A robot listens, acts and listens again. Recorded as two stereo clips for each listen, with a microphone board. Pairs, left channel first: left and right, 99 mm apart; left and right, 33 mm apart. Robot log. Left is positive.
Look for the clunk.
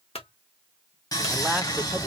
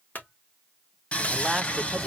cmd yaw +90
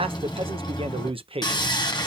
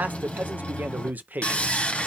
end: I heard a clunk from this way, but can't make it out now.